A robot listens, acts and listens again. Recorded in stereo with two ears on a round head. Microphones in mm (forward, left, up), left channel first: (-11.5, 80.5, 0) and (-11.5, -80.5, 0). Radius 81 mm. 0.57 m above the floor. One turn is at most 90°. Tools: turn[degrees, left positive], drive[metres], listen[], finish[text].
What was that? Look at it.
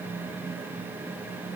Action: listen[]
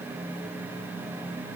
Action: listen[]
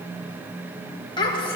Thought: The child speaking: about 30° left or 150° left.
Action: turn[30]
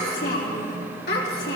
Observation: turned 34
Thought: So it is at 110° left.
Action: turn[90]
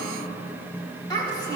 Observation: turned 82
Thought: The child speaking is now 20° left.
Action: turn[20]
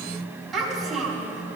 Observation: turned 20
Action: finish[Facing the child speaking.]